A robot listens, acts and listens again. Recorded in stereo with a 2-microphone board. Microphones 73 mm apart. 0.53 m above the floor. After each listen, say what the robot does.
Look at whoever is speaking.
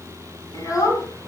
Turn 45° left.
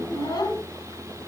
Turn 80° left.
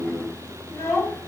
Turn 40° left.
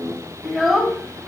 Facing the child speaking, 2 to 4 m away.